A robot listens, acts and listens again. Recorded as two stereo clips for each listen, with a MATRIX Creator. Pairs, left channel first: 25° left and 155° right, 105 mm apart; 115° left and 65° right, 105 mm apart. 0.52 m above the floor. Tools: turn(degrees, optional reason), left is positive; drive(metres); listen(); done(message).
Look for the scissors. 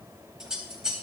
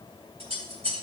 turn(degrees=-75, reason="The scissors: 75° right.")
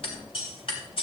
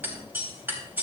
done("Found it: scissors, straight ahead.")